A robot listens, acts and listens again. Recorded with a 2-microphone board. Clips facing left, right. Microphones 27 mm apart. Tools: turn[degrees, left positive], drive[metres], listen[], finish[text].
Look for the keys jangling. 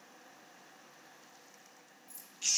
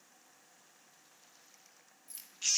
Thought: The keys jangling: about 55° right or 125° right.
Action: turn[-55]
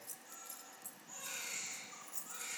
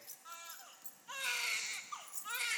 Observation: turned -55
Action: finish[Found it: keys jangling, straight ahead.]